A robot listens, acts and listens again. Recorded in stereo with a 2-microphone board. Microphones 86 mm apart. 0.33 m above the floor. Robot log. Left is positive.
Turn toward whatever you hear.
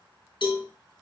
note: The cowbell: about 65° left or 115° left.
cmd yaw +65
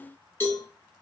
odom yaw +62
note: So it is at 30° left.
cmd yaw +30
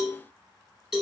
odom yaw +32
end: Facing the cowbell, 2 to 4 m away.